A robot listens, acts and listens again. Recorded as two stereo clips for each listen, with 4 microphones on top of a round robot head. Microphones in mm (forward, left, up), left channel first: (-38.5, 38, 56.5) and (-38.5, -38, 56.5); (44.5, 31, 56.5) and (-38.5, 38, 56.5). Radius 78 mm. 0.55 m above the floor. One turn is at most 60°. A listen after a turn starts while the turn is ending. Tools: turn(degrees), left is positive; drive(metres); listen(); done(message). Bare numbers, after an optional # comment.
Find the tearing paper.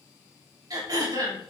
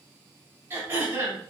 listen()
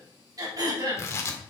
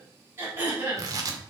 # The tearing paper: 140° left.
turn(60)
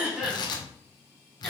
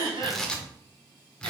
# The tearing paper is now 75° left.
turn(60)
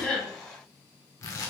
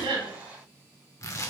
# The tearing paper is now 40° left.
turn(40)
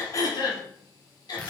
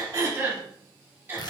listen()
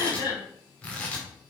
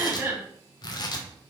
# The tearing paper is now 15° left.
turn(15)
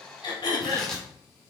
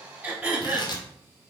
done("Found it: tearing paper, straight ahead, 1 to 2 m away.")